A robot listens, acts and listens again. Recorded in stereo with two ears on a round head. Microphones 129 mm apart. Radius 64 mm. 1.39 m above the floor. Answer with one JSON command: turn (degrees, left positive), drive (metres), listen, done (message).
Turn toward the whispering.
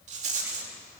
{"listen": true}
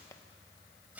{"listen": true}
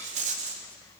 {"done": "I can't make out whispering to turn to."}